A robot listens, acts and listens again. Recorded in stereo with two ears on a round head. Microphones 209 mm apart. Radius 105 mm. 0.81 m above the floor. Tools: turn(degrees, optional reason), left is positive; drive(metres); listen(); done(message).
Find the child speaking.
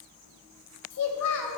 turn(degrees=90)
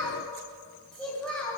done("Facing the child speaking.")